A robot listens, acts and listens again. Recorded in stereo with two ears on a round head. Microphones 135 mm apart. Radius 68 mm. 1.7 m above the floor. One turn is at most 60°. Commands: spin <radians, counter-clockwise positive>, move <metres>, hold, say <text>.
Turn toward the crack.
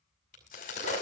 spin 0.96
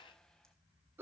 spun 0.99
hold
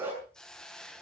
say I heard a crack, but can't make it out now. It was about 5° right or 70° left.